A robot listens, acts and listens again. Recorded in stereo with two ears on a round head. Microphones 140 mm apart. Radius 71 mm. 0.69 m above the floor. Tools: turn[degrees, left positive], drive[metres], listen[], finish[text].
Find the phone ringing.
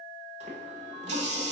Action: listen[]
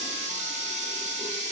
Action: listen[]
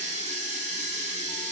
Action: finish[I can't make out a phone ringing to turn to.]